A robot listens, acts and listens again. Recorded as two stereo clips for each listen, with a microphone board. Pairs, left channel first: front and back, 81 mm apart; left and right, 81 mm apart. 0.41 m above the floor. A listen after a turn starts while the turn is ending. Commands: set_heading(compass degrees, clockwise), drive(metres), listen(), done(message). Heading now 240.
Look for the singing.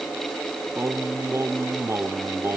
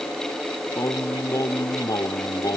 set_heading(115)
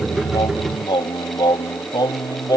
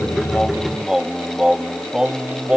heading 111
set_heading(131)
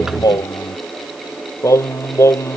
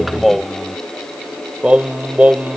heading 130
set_heading(160)
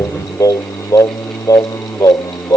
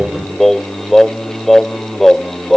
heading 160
done("Facing the singing.")